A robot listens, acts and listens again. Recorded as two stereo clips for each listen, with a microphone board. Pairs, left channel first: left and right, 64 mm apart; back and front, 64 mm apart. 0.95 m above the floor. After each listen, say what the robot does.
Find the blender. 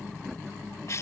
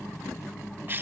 Keep listening.
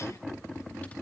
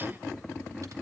Keep listening.
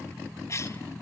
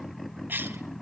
I can't make out a blender, only a cough.